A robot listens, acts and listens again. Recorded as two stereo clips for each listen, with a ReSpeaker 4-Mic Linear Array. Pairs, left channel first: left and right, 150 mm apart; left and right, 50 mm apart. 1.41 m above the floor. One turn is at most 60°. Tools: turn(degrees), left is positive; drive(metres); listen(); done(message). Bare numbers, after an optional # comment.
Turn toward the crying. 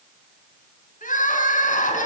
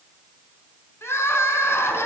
# The crying: about 65° left or 115° left.
turn(60)
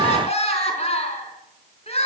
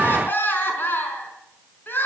# So it is at 50° left.
turn(50)
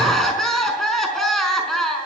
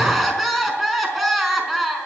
done("Facing the crying, over 4 m away.")